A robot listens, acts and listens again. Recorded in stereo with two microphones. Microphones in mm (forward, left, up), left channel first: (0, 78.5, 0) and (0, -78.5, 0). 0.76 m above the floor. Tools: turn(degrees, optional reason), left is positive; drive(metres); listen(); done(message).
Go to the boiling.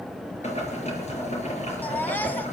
turn(degrees=45, reason="The boiling: about 45° left or 135° left.")
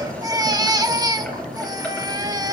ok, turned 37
turn(degrees=10, reason="So it is at 10° left.")
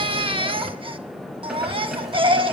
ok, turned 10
drive(metres=1.0)
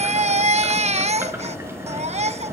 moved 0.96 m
turn(degrees=-15, reason="The boiling is now 15° right.")
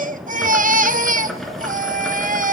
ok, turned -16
drive(metres=1.0)
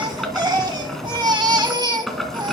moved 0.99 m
drive(metres=1.0)
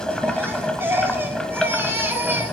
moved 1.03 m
drive(metres=1.0)
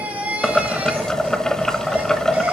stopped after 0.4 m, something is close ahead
done("I am next to the boiling.")